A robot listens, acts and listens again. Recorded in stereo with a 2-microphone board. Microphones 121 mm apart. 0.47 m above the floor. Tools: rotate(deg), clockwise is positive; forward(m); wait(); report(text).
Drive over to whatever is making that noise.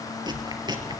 rotate(35)
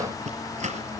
rotate(115)
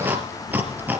rotate(15)
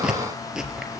forward(1.0)
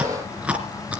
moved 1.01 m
rotate(10)
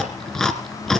forward(1.0)
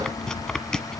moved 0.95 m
forward(1.0)
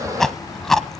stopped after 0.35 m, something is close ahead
report("Arrived at the chewing, straight ahead.")